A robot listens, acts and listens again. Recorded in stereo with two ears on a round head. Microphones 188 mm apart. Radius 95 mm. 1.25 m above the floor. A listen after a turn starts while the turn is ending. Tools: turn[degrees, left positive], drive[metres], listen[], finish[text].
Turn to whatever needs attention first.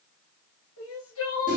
Thought: The crying: about 70° left or 110° left.
Action: turn[70]
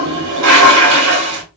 Action: listen[]
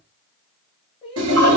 Thought: So it is at 25° left.
Action: turn[25]
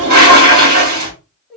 Action: finish[Found it: crying, straight ahead, 1 to 2 m away.]